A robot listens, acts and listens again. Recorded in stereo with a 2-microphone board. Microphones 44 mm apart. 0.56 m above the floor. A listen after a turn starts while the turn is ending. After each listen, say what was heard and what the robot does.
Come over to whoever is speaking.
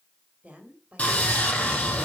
The woman speaking: about 30° right or 150° right. Turn 30° right.
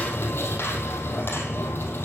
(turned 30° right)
Keep listening.
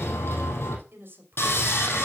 So it is at 120° right. Turn 120° right.
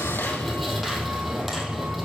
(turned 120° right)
Keep listening.
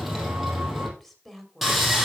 Drive 1.0 m forward.
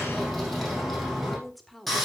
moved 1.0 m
Drive 1.0 m forward.
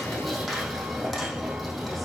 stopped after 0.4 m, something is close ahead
Keep listening.
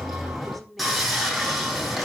I am next to the woman speaking.